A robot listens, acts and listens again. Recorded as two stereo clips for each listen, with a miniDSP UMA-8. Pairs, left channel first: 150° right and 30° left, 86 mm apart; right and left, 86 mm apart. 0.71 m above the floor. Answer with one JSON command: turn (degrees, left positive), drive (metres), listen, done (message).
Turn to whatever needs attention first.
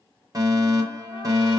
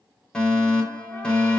{"turn": -10}
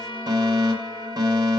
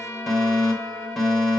{"done": "Found it: a fire alarm, straight ahead."}